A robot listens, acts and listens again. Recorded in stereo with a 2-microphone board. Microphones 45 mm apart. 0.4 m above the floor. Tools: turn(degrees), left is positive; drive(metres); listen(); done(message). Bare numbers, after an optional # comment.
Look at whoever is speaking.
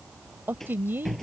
# The woman speaking: about 55° right or 125° right.
turn(-55)
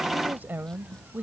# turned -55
# So it is at 60° right.
turn(-60)
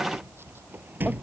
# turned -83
# Nothing new. It was at 25° left.
turn(25)
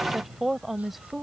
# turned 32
done("Facing the woman speaking.")